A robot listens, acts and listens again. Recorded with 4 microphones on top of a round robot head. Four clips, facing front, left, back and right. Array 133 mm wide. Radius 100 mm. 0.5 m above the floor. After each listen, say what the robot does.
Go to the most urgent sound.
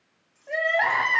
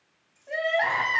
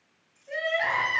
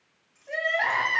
Turn 15° left.
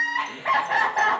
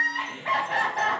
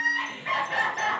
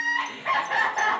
Drive 1.0 m forward.
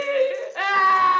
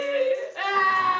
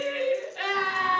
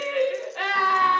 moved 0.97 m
Drive 1.0 m forward.
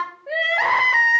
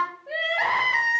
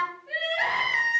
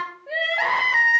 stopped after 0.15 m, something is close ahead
I am next to the crying.